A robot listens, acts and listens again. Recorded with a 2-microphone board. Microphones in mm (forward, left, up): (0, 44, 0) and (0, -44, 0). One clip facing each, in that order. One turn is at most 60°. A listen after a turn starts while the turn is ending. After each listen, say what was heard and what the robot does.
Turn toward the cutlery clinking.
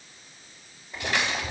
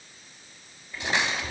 The cutlery clinking: about 20° right or 160° right. Turn 20° right.
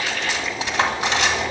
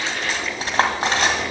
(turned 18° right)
So it is at 140° right. Turn 60° right.
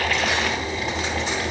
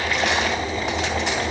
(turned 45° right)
Nothing new. It was at 95° right. Turn 60° right.
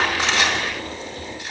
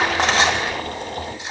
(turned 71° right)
The cutlery clinking is now 20° right. Turn 20° right.
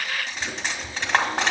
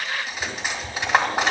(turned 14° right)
Facing the cutlery clinking, 2 to 4 m away.